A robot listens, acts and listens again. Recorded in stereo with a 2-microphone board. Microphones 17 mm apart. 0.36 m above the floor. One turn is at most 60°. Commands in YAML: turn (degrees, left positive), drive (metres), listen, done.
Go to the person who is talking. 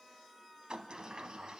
listen: true
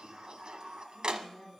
turn: 30
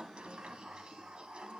listen: true
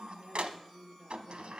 turn: -30
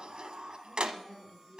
drive: 1.0
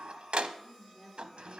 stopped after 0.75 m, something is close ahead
done: "Blocked. The woman speaking is further on, straight ahead."